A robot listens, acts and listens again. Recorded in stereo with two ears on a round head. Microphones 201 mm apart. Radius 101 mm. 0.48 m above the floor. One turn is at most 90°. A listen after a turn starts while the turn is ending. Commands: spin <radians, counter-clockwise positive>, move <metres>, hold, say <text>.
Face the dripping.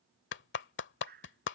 spin -0.79
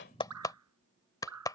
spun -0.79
spin -1.57
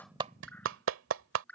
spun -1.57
say Facing the dripping.